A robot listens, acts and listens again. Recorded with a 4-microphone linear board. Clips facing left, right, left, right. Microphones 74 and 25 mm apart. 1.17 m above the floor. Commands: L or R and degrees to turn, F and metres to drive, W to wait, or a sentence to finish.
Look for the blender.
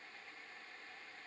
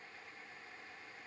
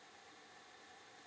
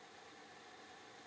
W
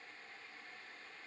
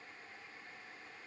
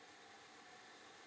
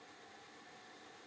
W
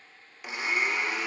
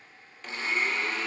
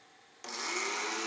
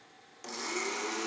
L30
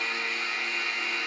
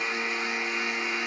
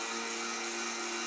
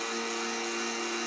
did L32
R20
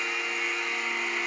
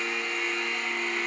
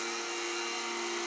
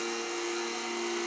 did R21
Found it: a blender, straight ahead.